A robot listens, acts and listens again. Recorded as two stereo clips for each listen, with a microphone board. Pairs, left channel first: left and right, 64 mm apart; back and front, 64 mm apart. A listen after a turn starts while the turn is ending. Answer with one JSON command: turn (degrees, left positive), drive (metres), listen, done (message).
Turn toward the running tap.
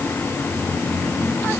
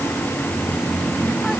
{"listen": true}
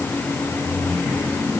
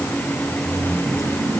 {"listen": true}
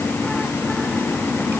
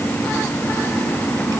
{"done": "I can't make out a running tap."}